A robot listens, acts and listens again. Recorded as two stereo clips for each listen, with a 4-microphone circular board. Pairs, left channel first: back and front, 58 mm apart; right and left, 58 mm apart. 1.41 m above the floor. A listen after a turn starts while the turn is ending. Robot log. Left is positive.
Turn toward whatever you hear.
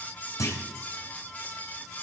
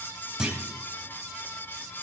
note: The clunk: 165° left.
cmd yaw +165
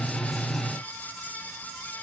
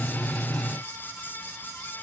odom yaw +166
end: I heard a clunk from this way, but can't make it out now.